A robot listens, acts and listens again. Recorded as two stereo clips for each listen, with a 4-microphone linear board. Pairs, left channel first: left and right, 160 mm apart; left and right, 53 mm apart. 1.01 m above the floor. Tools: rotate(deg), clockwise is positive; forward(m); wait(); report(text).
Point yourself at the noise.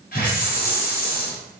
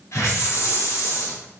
rotate(-60)
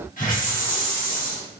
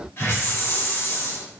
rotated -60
rotate(-55)
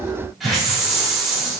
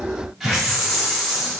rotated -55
report("Found it: a hiss, straight ahead.")